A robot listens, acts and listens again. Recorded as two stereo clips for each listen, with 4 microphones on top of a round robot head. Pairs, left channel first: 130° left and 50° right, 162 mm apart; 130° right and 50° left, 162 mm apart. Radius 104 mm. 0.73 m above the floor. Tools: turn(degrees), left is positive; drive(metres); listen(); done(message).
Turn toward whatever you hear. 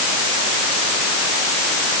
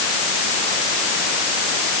listen()
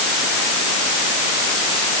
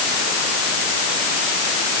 listen()
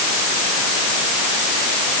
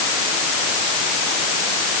done("I can't make out anything to turn to.")